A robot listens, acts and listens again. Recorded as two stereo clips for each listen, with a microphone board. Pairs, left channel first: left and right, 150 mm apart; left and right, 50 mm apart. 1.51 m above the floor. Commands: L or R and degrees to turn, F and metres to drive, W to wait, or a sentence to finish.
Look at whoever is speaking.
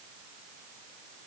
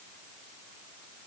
W
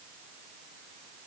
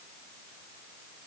W
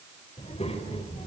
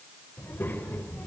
L40
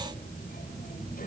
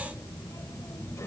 L115
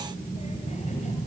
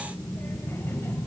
L50
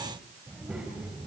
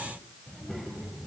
Found it: a child speaking, straight ahead, over 4 m away.